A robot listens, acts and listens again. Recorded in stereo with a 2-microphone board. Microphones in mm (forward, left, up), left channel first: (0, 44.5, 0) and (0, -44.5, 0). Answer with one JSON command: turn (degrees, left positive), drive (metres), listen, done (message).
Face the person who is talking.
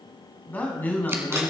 {"turn": 20}
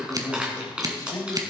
{"turn": 140}
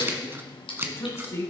{"turn": 35}
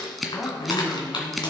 {"done": "Facing the man speaking."}